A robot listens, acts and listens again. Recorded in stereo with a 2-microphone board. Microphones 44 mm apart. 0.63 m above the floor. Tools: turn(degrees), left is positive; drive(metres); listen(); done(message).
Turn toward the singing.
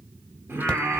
turn(degrees=-65)
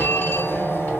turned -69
listen()
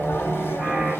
listen()
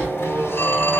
turn(degrees=-25)
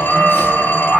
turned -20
done("Found it: singing, straight ahead, 1 to 2 m away.")